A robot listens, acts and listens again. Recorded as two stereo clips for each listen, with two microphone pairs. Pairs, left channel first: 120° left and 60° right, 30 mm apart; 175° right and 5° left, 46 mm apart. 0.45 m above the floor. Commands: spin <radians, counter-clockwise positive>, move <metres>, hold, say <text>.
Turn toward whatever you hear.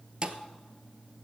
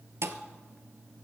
say Facing the thud, under 1 m away.